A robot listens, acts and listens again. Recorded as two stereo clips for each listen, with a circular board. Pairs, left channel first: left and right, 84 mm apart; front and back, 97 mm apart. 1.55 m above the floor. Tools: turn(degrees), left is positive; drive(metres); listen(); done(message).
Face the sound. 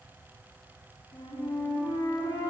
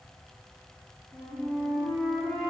turn(degrees=80)
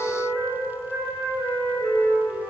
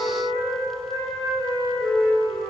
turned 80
turn(degrees=15)
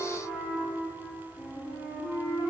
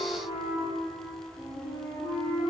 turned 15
done("Found it: a flute, straight ahead.")